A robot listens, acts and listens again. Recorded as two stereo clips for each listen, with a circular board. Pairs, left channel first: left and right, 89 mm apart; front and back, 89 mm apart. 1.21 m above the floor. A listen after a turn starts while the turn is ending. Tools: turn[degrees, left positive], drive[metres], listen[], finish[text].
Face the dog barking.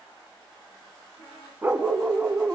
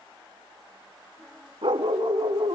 Thought: The dog barking: 160° right.
Action: turn[-160]
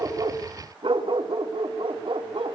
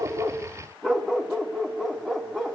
Thought: The dog barking is now 85° right.
Action: turn[-85]
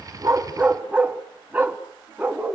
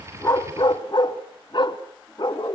Thought: The dog barking is now 20° right.
Action: turn[-20]
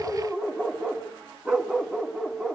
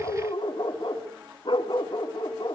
Action: finish[Found it: a dog barking, straight ahead, 1 to 2 m away.]